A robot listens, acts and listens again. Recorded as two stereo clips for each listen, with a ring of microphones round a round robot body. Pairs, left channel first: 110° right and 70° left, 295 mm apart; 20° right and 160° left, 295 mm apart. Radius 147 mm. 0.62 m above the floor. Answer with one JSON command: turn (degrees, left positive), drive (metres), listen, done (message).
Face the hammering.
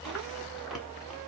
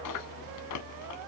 {"listen": true}
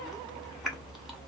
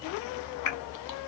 {"listen": true}
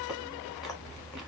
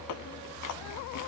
{"done": "I can't make out hammering, only chewing."}